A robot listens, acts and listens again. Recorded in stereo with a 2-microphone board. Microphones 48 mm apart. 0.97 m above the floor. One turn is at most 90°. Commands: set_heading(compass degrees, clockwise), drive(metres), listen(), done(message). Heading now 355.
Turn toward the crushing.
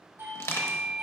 set_heading(285)
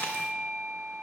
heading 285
listen()
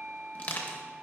set_heading(250)
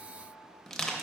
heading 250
done("Facing the crushing.")